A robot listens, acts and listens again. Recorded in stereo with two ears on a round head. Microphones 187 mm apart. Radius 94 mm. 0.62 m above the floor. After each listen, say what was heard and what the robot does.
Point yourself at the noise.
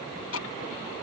The ticking: about 75° left or 105° left. Turn 75° left.
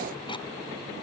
Keep listening.
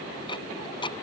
So it is at 25° left. Turn 25° left.
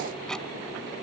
Keep listening.
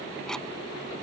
Keep listening.
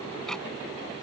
Facing where the ticking came from. I can't hear it now.